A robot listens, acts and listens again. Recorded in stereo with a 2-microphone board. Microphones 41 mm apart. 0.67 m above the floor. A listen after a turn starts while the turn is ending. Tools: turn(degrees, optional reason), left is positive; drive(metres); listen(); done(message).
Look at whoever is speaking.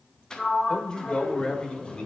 turn(degrees=30, reason="The man speaking: about 30° left or 150° left.")
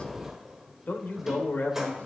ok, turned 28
turn(degrees=120, reason="So it is at 120° left.")
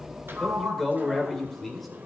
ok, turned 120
done("Facing the man speaking.")